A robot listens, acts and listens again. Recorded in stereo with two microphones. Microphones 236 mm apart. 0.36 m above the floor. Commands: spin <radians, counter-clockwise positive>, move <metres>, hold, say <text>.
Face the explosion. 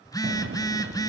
spin -0.79
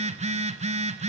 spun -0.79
hold
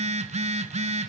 say I heard an explosion, but can't make it out now. It was about straight ahead or 90° right.